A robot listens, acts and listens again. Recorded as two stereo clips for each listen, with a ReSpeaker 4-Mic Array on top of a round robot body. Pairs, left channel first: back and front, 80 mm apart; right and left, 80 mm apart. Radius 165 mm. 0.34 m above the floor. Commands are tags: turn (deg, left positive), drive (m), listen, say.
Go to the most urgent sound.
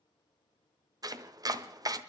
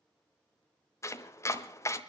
<listen/>
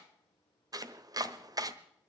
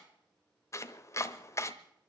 <listen/>
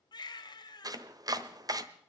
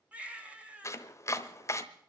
<turn deg="165"/>
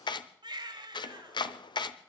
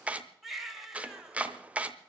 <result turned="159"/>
<drive m="1.0"/>
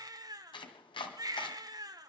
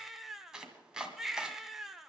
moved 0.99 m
<drive m="1.0"/>
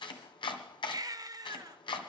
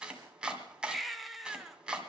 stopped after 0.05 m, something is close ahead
<say>I am next to the baby crying.</say>